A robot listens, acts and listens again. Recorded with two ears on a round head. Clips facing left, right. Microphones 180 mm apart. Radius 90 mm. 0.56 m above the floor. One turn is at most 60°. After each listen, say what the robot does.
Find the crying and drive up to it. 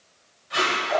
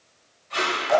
Keep listening.
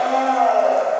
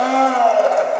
Keep listening.
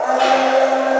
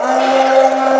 I can't make out crying, only a blender and tape being pulled.